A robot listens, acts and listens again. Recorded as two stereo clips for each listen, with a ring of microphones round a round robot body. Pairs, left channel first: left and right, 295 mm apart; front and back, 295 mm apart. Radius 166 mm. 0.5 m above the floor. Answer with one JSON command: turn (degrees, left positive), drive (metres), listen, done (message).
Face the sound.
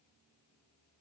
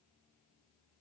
{"listen": true}
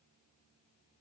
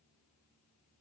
{"listen": true}
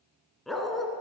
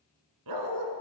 {"turn": 180}
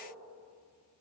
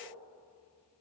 {"listen": true}
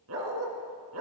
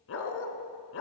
{"turn": -45}
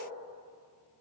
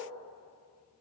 {"listen": true}
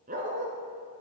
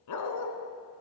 {"turn": -25}
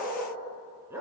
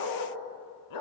{"done": "Facing the dog barking."}